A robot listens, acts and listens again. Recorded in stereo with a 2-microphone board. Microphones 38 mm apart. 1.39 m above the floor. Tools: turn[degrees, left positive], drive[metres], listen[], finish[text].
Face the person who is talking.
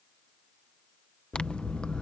Action: listen[]
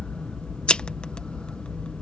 Action: listen[]
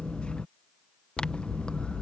Action: finish[I can't make out anyone speaking, only scissors.]